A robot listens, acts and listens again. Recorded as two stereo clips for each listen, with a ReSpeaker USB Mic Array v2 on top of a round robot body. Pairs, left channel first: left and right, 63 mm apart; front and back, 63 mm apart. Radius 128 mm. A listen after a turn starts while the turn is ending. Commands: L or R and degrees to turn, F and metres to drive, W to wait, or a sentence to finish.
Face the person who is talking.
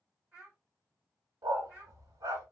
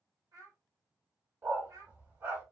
R160
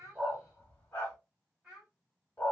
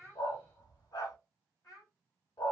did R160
R15
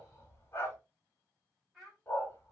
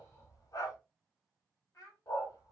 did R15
Facing the child speaking.